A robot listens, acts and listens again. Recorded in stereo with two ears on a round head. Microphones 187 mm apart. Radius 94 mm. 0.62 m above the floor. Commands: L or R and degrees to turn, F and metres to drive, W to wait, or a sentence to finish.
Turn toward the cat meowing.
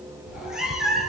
L30
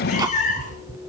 L140
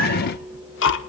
W
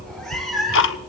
Facing the cat meowing, over 4 m away.